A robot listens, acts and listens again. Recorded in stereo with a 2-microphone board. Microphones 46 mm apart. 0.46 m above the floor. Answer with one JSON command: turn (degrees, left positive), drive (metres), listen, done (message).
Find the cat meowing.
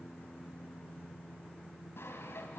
{"listen": true}
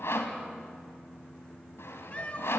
{"turn": 30}
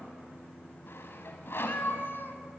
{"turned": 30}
{"turn": 120}
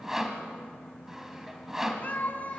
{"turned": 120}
{"turn": 40}
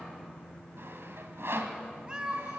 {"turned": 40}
{"turn": -25}
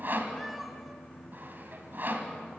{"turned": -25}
{"listen": true}
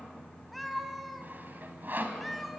{"done": "Found it: a cat meowing, straight ahead, 1 to 2 m away."}